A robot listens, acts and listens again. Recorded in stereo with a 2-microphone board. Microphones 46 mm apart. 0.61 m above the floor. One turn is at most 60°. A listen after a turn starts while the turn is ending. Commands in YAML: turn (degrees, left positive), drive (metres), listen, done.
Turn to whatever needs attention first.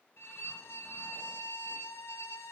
listen: true
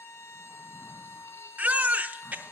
turn: -35
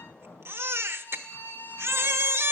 turn: -60
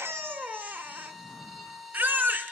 turn: -45
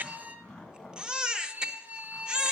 turn: -20
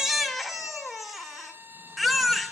done: "Found it: a baby crying, straight ahead."